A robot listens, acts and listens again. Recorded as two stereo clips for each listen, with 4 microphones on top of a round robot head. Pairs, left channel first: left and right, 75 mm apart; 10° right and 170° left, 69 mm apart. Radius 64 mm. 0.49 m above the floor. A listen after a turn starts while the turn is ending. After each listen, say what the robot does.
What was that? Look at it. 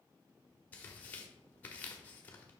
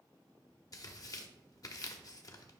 Turn 20° left.
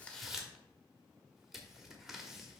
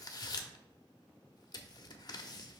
Facing the tearing paper, under 1 m away.